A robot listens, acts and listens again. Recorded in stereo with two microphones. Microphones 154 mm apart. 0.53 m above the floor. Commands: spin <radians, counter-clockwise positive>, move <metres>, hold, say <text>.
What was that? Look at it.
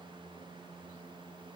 hold
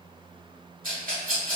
spin -1.13
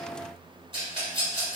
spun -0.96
spin -0.61
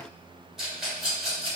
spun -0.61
say Facing the rattle, 1 to 2 m away.